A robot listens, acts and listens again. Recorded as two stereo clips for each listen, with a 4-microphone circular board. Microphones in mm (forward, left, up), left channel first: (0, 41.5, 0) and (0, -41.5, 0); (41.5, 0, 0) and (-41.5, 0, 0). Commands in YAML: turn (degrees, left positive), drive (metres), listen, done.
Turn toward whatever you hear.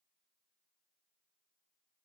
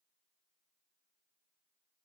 listen: true
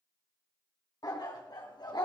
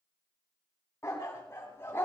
turn: 60
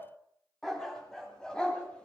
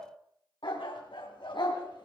turn: 10
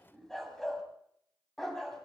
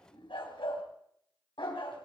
done: "Facing the dog barking, 2 to 4 m away."